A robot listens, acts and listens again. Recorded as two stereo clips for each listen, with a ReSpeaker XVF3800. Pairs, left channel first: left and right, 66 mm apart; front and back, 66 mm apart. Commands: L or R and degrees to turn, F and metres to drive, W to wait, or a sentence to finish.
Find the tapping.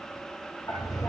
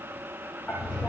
L65
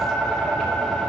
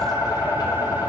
Facing the tapping.